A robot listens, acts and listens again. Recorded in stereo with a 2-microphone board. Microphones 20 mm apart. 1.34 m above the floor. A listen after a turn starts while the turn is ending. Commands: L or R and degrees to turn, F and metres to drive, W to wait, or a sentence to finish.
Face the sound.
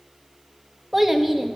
R15
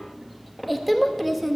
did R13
Facing the child speaking, 1 to 2 m away.